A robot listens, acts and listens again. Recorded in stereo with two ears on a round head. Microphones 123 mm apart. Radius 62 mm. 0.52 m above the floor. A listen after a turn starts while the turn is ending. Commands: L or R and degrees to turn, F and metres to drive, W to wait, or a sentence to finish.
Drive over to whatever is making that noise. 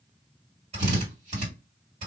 R50
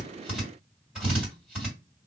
R10
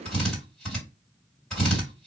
F1.0
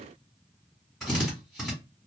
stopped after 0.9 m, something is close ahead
Arrived at the drill, straight ahead.